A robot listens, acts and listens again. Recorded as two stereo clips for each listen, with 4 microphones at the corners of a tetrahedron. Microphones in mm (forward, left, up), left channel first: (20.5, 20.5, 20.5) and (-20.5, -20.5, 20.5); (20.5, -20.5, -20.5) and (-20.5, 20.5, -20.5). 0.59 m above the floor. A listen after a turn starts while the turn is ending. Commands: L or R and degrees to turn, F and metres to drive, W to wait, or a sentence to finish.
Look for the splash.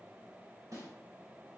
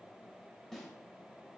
W
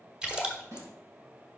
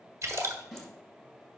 L150
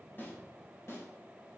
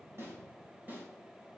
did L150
I heard a splash from this way, but can't make it out now.